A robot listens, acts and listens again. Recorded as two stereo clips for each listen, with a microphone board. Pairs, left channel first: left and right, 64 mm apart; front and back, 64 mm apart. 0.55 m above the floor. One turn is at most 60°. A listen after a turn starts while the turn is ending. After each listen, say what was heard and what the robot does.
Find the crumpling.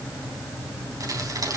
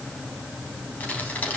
The crumpling: 65° right. Turn 60° right.
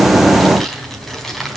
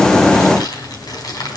Found it: crumpling, straight ahead, 2 to 4 m away.